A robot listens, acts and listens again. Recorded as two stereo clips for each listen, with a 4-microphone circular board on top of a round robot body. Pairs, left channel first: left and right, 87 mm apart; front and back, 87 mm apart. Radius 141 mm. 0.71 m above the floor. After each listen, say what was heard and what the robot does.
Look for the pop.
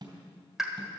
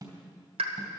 The pop: 175° right. Turn 175° right.
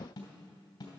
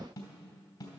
I heard a pop from this way, but can't make it out now.